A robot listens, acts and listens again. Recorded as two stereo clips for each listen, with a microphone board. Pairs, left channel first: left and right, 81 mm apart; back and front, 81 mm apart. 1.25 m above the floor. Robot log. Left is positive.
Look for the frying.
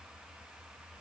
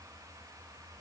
cmd idle
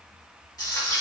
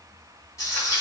note: The frying: 130° left.
cmd yaw +130
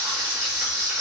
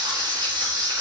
note: The frying is now 30° right.
cmd yaw -30
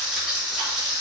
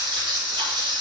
end: Facing the frying, 2 to 4 m away.